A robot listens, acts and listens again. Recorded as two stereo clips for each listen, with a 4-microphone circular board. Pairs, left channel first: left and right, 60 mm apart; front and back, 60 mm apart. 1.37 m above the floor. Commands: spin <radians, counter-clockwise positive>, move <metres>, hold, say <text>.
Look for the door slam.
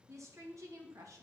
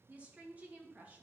hold
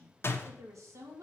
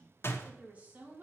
spin 0.79
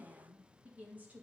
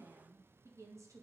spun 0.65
spin 0.17
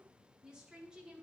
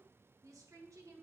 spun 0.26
say I heard a door slam from this way, but can't make it out now.